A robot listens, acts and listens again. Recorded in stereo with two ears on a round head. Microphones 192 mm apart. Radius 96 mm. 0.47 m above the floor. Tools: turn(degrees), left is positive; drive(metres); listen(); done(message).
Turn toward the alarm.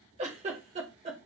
listen()
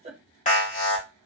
turn(degrees=35)
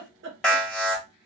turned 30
done("Found it: an alarm, straight ahead.")